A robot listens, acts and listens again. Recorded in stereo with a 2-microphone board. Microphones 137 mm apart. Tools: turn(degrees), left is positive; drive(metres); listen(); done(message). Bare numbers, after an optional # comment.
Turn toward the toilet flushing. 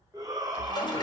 # The toilet flushing: about 35° left or 145° left.
turn(35)
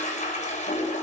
# So it is at 110° left.
turn(110)
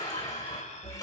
# The toilet flushing is now 30° left.
turn(30)
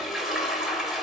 done("Found it: a toilet flushing, straight ahead.")